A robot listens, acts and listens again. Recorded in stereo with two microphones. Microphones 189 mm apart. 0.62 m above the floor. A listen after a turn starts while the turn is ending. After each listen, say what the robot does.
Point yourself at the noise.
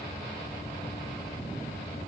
Keep listening.
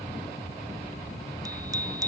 Turn 20° right.
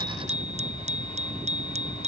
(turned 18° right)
Turn 145° right.
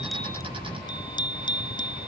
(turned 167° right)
Turn 25° left.
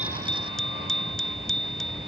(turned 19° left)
Facing the bicycle bell.